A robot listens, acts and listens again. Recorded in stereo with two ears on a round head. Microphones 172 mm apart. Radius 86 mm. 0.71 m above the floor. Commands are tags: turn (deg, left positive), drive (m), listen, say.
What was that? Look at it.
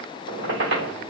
<turn deg="-65"/>
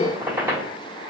<turn deg="-15"/>
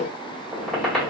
<say>Facing the squeak, 1 to 2 m away.</say>